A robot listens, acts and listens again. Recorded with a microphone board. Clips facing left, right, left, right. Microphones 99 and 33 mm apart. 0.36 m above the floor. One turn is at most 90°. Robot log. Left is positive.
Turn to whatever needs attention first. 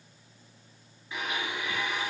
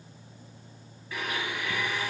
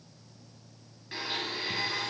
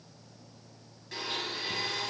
cmd idle
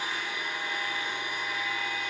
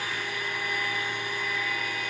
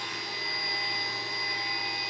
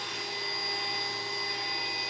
cmd idle
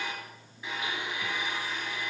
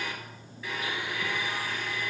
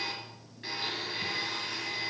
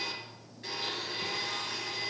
end: I can't make out anything urgent to turn to.